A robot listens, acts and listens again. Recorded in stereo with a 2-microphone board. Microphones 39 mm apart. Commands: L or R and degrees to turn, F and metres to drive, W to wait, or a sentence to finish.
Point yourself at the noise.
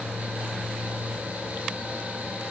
W
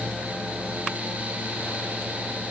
W
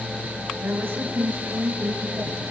R70
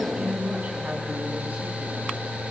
R40
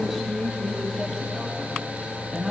Found it: a woman speaking, straight ahead.